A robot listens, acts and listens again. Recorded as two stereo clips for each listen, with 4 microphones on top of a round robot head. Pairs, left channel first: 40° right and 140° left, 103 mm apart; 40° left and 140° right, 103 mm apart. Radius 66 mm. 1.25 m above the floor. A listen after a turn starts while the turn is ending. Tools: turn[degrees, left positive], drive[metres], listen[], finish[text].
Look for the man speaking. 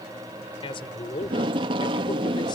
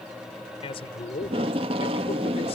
Action: finish[Found it: a man speaking, straight ahead.]